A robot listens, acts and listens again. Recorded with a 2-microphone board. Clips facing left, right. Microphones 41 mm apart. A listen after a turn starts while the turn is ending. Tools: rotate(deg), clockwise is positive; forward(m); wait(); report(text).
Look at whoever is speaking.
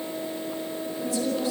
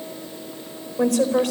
rotate(70)
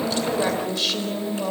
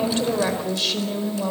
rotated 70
report("Found it: a woman speaking, straight ahead.")